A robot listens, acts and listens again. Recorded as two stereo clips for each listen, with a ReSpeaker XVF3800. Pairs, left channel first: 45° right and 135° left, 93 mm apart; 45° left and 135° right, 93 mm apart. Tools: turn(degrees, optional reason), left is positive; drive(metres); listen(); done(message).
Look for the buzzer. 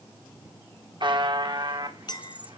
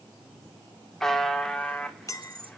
turn(degrees=130, reason="The buzzer: 130° left.")
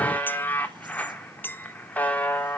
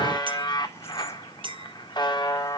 turn(degrees=25, reason="The buzzer is now 25° left.")
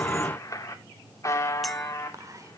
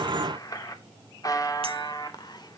done("Facing the buzzer.")